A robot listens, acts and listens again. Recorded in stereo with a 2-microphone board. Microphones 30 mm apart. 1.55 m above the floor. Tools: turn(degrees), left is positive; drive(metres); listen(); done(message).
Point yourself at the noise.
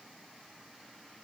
listen()
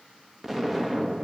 turn(degrees=-30)
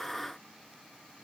listen()
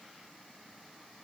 done("I heard an explosion, but can't make it out now. It was about 20° left or 140° right.")